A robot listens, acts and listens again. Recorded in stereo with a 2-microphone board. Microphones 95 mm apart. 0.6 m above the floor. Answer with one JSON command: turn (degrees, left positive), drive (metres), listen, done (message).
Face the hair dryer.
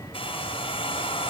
{"turn": 75}
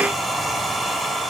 {"done": "Found it: a hair dryer, straight ahead."}